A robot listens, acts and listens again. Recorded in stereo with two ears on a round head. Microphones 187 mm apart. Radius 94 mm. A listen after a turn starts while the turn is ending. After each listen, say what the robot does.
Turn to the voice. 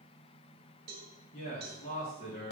Turn 30° left.
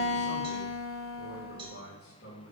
Turn 120° left.
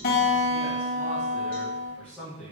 Facing the man speaking, 1 to 2 m away.